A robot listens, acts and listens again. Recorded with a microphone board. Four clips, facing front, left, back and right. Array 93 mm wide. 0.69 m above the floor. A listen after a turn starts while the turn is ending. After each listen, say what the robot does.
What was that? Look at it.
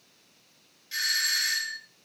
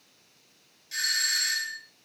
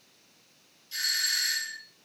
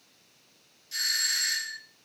Turn 15° left.
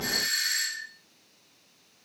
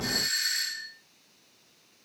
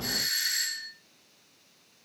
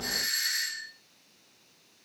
Facing the doorbell, 2 to 4 m away.